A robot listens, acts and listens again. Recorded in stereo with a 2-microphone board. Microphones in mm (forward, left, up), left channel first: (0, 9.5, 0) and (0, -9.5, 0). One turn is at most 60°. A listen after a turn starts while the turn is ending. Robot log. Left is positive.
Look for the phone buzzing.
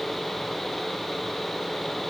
cmd idle
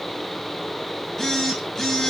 note: The phone buzzing: about 20° left or 160° left.
cmd yaw +20
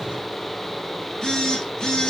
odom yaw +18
note: So it is at 140° left.
cmd yaw +60
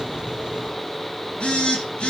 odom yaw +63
note: The phone buzzing is now 80° left.
cmd yaw +60
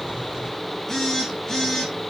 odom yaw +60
note: The phone buzzing is now 20° left.
cmd yaw +20
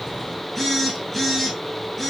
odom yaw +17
end: Facing the phone buzzing.